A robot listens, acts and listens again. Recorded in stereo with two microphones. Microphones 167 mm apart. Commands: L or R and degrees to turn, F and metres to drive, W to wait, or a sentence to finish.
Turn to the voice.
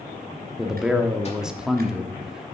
R30
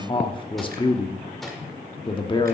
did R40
L35
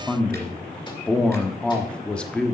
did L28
Facing the man speaking, 1 to 2 m away.